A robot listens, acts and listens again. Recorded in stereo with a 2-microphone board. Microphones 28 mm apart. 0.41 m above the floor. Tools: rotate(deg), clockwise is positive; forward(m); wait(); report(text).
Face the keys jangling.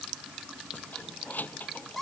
rotate(-90)
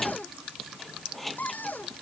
report("Found it: keys jangling, straight ahead.")